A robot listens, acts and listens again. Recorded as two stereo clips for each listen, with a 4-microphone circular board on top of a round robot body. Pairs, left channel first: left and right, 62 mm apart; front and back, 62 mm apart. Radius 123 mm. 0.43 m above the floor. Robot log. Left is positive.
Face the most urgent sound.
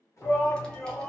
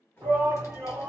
note: The shout: 130° left.
cmd yaw +130
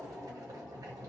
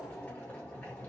note: The shout is now 10° left.
cmd yaw +10
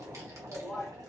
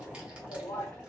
end: Facing the shout, 1 to 2 m away.